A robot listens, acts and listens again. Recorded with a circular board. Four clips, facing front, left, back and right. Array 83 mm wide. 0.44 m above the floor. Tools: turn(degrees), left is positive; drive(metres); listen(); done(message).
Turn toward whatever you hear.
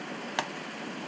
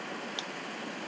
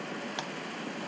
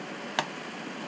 turn(degrees=-60)
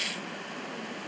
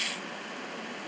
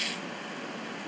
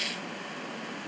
done("I heard a pop from this way, but can't make it out now.")